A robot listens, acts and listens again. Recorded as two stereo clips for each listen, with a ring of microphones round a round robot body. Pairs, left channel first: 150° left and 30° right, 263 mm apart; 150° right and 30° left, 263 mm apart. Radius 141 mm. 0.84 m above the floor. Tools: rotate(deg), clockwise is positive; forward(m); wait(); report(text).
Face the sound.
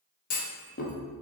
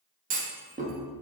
rotate(-90)
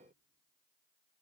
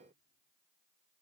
report("I heard a clunk from this way, but can't make it out now.")